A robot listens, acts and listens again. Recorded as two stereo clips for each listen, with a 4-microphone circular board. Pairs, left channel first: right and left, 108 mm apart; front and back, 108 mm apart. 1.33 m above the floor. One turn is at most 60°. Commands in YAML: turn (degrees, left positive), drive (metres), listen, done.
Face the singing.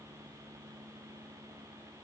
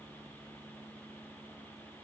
listen: true
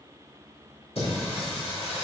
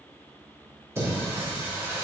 turn: -60
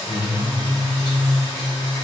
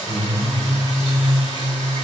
turn: -45
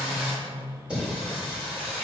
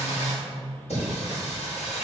turn: 10
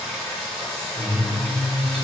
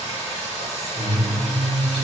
done: "Found it: singing, straight ahead, over 4 m away."